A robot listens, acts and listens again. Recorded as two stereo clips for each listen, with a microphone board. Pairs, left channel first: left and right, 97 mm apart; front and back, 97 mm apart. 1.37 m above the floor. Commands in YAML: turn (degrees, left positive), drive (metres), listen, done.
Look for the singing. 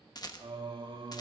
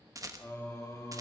turn: -55
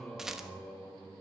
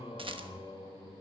turn: 10
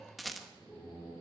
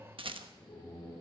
turn: 10
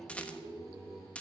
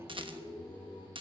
done: "Found it: singing, straight ahead."